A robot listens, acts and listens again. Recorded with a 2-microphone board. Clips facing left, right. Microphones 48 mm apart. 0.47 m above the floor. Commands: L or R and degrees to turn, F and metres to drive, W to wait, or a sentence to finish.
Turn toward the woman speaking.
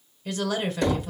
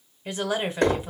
R20
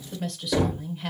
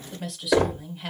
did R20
Facing the woman speaking, 1 to 2 m away.